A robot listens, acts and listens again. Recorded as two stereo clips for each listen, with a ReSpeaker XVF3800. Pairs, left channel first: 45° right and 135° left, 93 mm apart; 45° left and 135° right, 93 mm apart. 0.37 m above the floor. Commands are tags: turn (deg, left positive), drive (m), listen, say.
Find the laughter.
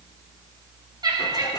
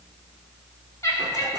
<turn deg="100"/>
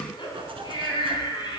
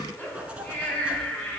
<turn deg="-25"/>
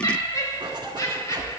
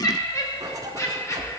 <say>Facing the laughter, 2 to 4 m away.</say>